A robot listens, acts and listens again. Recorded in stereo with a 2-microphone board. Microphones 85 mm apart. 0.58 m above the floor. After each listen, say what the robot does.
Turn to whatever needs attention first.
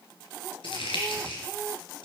Keep listening.
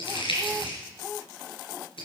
Keep listening.
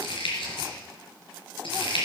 I can't make out anything urgent to turn to.